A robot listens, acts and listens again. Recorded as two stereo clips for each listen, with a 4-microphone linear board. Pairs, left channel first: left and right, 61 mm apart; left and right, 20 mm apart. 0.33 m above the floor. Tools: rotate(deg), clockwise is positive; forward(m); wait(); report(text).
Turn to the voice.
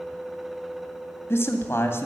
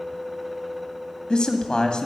rotate(-45)
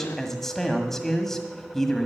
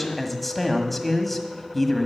report("Found it: a man speaking, straight ahead, 1 to 2 m away.")